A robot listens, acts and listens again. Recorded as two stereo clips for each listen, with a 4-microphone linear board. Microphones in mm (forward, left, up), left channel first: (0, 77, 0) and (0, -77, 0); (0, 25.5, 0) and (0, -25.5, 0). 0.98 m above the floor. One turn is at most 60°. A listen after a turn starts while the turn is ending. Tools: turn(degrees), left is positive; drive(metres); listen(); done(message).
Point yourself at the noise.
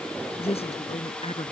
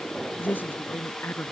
turn(degrees=40)
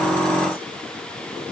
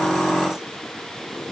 listen()
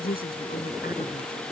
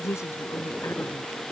turn(degrees=60)
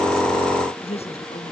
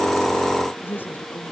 turn(degrees=40)
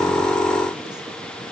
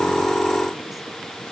listen()
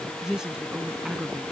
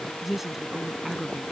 done("Facing the woman speaking.")